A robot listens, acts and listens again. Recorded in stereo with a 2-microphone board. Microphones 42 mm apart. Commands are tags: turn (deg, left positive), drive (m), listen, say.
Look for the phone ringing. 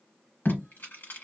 <listen/>
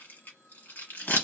<listen/>
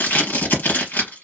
<say>I can't make out a phone ringing to turn to.</say>